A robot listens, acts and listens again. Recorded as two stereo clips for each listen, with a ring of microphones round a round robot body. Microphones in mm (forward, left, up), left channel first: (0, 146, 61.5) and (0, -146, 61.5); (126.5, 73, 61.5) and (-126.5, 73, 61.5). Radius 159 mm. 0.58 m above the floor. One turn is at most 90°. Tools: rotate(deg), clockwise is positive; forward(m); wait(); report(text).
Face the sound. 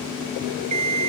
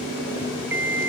rotate(90)
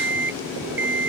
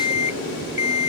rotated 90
rotate(35)
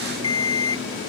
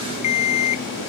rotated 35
rotate(-10)
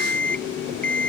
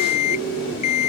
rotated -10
report("Facing the alarm clock.")